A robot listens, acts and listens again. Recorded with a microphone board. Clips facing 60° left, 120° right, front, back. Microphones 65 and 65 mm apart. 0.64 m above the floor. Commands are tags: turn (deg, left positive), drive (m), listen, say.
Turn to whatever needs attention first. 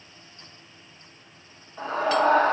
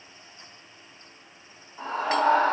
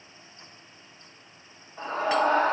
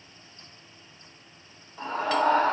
<turn deg="45"/>
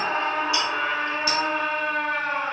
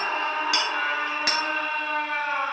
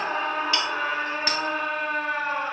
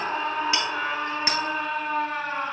<say>Found it: a scream, straight ahead, 2 to 4 m away.</say>